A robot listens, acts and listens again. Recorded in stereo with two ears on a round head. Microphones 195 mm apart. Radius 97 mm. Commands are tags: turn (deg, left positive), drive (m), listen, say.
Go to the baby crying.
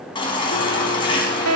<turn deg="25"/>
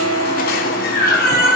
<turn deg="135"/>
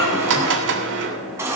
<turn deg="-10"/>
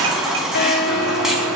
<drive m="1.0"/>
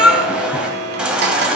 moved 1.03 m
<drive m="1.0"/>
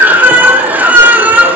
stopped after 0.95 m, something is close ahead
<turn deg="-10"/>
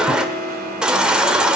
<say>I am next to the baby crying.</say>